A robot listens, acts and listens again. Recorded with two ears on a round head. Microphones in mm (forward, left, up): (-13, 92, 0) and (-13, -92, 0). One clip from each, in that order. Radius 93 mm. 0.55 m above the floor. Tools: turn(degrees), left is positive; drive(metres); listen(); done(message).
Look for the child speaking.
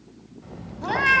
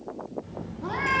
turn(degrees=55)
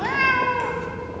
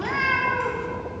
listen()
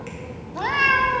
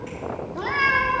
turn(degrees=75)
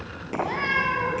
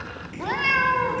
done("Facing the child speaking.")